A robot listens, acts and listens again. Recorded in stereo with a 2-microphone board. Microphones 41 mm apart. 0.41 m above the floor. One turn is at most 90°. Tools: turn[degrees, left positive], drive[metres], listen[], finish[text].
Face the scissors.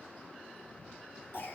Action: listen[]
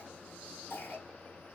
Action: listen[]
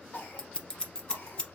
Thought: The scissors: about 20° left or 160° left.
Action: turn[20]
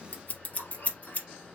Thought: So it is at 140° left.
Action: turn[90]
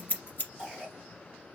Thought: The scissors is now 50° left.
Action: turn[50]
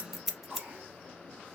Action: finish[Facing the scissors.]